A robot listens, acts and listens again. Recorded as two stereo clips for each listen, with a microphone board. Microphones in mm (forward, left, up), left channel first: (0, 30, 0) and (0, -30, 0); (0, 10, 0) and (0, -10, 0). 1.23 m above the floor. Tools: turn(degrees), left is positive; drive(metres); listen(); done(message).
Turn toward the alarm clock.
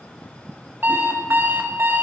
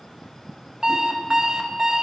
turn(degrees=-40)
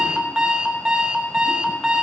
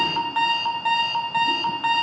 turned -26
turn(degrees=-20)
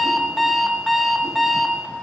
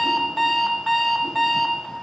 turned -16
done("Found it: an alarm clock, straight ahead, under 1 m away.")